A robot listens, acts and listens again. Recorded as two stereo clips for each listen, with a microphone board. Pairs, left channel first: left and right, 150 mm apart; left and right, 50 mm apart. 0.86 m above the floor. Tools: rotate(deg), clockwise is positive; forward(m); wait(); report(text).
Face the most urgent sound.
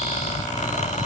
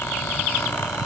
wait()
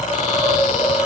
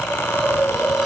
wait()
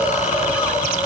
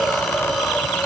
report("I can't make out anything urgent, only a hiss.")